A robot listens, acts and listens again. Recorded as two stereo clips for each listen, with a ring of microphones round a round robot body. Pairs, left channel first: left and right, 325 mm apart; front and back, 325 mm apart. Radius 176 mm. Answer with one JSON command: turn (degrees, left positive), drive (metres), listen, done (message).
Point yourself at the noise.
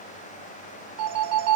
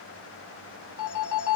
{"turn": -45}
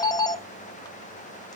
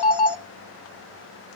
{"turn": 10}
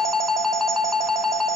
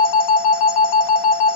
{"done": "Found it: a phone ringing, straight ahead, under 1 m away."}